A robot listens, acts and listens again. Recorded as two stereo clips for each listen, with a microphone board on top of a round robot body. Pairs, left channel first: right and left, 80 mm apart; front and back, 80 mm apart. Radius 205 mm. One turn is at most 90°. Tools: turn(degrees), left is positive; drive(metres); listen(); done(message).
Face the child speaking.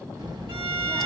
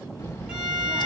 turn(degrees=60)
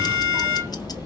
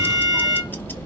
listen()
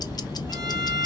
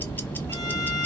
listen()
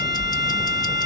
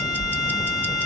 turn(degrees=35)
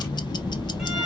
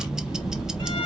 listen()
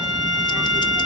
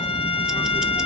listen()
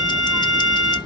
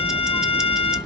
done("Facing where the child speaking came from. I can't hear it now.")